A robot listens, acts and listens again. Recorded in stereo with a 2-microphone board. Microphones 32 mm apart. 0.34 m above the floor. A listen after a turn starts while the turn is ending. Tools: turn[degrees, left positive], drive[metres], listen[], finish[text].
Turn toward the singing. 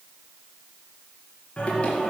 Thought: The singing: about 35° left or 145° left.
Action: turn[35]
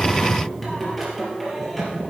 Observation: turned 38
Action: finish[Found it: singing, straight ahead.]